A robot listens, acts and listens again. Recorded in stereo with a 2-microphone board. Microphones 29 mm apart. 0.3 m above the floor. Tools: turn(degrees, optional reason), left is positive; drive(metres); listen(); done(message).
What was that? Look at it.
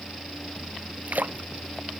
turn(degrees=-90)
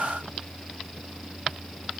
done("I heard a splash from this way, but can't make it out now.")